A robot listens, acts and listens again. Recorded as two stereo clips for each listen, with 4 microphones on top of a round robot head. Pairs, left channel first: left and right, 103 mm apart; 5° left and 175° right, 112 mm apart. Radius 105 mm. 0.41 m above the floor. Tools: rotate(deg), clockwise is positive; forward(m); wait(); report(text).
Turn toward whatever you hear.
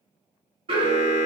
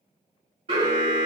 rotate(130)
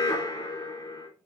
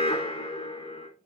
rotate(-40)
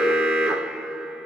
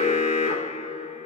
rotate(10)
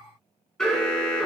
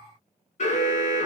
report("Found it: an alarm, straight ahead.")